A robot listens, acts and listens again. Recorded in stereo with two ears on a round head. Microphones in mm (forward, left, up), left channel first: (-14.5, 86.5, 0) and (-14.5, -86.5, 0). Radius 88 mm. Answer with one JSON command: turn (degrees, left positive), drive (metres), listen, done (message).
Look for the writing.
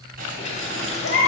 {"turn": -50}
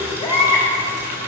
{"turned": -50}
{"listen": true}
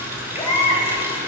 {"listen": true}
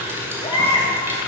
{"done": "I heard writing, but can't make it out now. It was about straight ahead or 80° right."}